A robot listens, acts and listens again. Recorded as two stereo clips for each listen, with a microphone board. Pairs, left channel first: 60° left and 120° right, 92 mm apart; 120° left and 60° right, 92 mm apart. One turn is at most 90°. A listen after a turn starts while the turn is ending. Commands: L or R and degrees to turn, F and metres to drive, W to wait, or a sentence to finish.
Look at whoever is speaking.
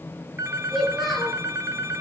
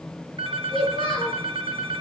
L90
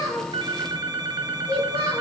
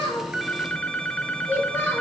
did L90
L50
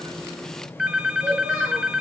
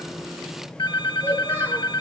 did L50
W
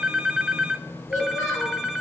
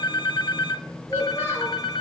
Found it: a child speaking, straight ahead.